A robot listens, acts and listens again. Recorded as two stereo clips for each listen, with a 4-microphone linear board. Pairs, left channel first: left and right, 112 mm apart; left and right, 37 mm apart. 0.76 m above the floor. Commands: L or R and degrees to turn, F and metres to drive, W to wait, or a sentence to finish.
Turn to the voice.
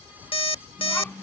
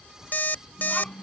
L30
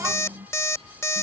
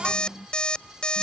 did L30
R20
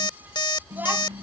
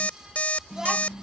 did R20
R15
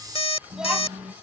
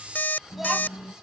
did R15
R10
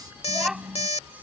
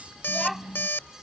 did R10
Found it: a child speaking, straight ahead.